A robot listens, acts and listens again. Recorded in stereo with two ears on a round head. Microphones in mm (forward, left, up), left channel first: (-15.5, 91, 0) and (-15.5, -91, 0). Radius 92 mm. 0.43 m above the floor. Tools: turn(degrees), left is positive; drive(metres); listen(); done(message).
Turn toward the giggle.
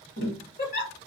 turn(degrees=45)
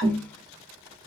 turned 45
listen()
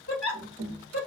turn(degrees=90)
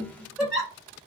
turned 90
done("Facing the giggle.")